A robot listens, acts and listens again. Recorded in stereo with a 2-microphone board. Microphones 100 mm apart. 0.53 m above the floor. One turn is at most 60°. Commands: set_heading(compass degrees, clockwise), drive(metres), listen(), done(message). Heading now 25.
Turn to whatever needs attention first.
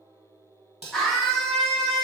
set_heading(355)
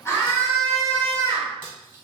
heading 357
set_heading(297)
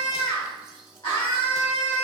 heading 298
set_heading(238)
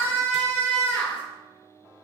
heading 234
set_heading(209)
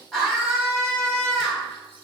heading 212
done("Facing the scream.")